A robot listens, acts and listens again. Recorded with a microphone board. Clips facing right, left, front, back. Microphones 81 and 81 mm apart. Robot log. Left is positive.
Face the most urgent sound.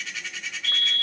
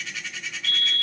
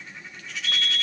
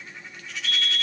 note: The fire alarm: 45° left.
cmd yaw +45
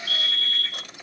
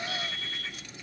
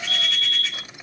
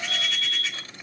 note: The fire alarm is now 15° left.
cmd yaw +15
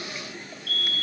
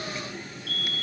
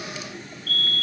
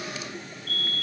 end: Found it: a fire alarm, straight ahead.